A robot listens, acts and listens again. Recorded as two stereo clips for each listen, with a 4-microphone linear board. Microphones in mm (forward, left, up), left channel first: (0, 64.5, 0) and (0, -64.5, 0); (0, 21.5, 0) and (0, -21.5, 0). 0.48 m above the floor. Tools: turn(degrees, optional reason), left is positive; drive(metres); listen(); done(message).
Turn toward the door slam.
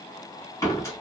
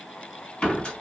turn(degrees=20, reason="The door slam: about 20° left or 160° left.")
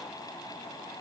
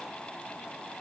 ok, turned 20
listen()
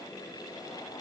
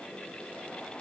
done("I heard a door slam, but can't make it out now. It was about straight ahead or 140° left.")